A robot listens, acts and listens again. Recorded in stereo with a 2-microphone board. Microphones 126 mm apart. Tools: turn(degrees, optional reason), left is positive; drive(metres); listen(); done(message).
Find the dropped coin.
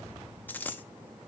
turn(degrees=30)
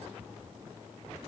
listen()
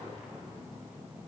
done("I heard a dropped coin, but can't make it out now. It was about 15° right or 135° left.")